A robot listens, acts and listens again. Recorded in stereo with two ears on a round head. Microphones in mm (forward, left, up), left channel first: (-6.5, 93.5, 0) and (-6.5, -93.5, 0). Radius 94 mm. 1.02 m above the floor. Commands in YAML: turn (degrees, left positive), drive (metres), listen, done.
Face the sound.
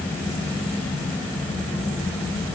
listen: true
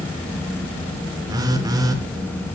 turn: -20
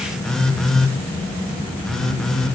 done: "Facing the phone buzzing, 1 to 2 m away."